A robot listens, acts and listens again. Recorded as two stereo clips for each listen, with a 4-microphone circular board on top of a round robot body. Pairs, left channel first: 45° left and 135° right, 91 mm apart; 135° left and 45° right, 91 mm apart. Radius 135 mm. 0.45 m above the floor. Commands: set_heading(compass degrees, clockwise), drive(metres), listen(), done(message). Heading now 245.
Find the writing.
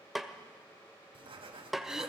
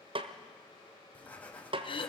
set_heading(35)
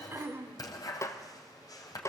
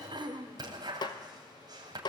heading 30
done("Found it: writing, straight ahead, 2 to 4 m away.")